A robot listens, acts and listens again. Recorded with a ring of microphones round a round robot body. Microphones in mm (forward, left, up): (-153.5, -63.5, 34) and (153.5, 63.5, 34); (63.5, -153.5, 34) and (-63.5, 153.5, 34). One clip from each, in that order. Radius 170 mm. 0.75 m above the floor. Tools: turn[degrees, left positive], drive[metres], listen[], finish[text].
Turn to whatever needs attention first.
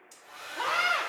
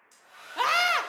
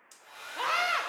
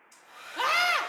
Thought: The scream: 35° left.
Action: turn[35]
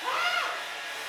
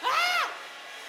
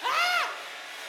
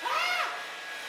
Thought: The scream is now 10° right.
Action: turn[-10]
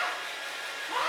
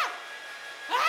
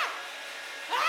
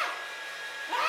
Action: finish[Found it: a scream, straight ahead.]